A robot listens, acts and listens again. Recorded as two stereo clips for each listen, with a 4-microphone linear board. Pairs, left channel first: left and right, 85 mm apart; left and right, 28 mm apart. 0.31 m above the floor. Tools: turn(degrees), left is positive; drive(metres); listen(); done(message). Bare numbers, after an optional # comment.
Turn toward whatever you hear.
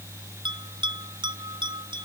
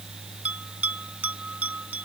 # The bell: about 70° right or 110° right.
turn(-70)
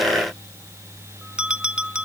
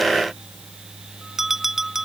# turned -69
# So it is at 10° right.
turn(-10)
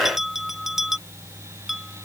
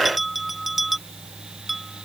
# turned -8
done("Found it: a bell, straight ahead.")